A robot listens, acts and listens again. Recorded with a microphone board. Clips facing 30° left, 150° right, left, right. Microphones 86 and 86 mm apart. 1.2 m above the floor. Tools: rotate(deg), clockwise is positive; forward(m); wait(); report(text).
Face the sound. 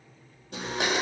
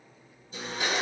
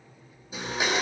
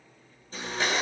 rotate(-10)
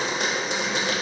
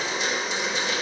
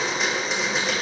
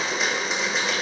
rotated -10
report("Found it: a blender, straight ahead, 2 to 4 m away.")